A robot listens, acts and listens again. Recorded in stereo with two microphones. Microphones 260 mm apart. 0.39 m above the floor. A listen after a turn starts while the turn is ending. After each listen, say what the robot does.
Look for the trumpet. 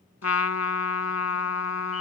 Turn 70° left.
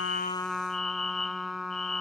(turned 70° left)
Facing the trumpet.